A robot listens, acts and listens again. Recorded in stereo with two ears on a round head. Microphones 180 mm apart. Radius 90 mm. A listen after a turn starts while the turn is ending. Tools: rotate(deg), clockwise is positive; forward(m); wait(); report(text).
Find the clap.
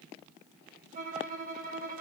wait()
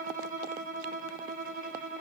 wait()
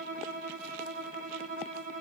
report("I can't make out a clap to turn to.")